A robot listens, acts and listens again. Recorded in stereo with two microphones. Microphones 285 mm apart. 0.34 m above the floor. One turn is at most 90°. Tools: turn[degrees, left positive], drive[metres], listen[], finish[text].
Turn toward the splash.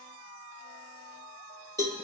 Action: listen[]
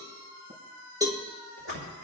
Thought: The splash: about 50° right or 130° right.
Action: turn[-50]
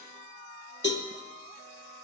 Action: listen[]
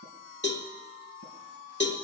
Action: finish[I heard a splash, but can't make it out now. It was about straight ahead or 80° right.]